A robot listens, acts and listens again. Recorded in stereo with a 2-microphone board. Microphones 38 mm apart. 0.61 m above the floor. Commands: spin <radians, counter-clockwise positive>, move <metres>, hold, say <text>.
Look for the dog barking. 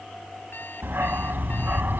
spin -1.05
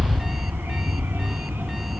spin -1.40
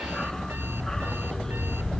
spin 0.26
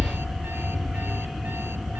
say Found it: a dog barking, straight ahead.